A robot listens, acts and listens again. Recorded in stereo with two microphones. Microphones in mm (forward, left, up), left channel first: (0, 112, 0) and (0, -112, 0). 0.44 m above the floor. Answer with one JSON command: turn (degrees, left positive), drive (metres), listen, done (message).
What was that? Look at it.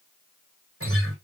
{"turn": -75}
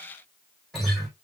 {"done": "Facing the guitar, 2 to 4 m away."}